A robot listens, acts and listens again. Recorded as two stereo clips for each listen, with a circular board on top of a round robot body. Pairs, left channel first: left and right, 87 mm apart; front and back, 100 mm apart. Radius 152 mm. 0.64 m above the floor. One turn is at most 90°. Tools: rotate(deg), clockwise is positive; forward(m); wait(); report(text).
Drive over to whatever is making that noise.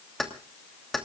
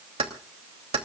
rotate(-90)
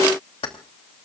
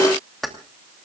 rotate(-90)
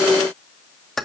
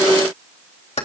forward(1.0)
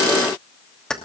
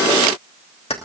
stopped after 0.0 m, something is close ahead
rotate(-10)
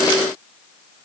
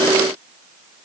wait()
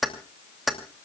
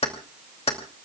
report("Something is in my way. I am facing the keys jangling but have not reached it.")